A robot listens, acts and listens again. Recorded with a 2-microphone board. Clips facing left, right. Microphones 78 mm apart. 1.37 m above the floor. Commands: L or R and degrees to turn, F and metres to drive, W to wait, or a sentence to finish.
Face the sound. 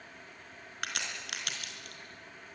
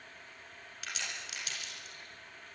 L60
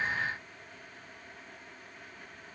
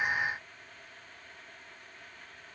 W
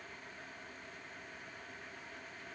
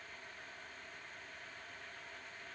I heard a crack, but can't make it out now. It was about straight ahead or 60° left.